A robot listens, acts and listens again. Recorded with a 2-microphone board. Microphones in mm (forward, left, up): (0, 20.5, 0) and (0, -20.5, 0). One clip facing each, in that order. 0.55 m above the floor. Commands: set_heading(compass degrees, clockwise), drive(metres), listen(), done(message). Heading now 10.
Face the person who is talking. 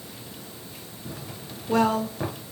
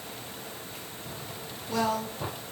set_heading(335)
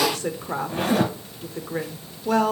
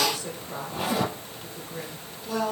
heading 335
set_heading(235)
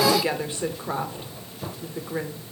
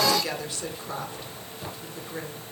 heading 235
set_heading(210)
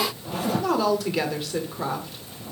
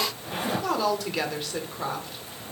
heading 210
done("Found it: a woman speaking, straight ahead, 1 to 2 m away.")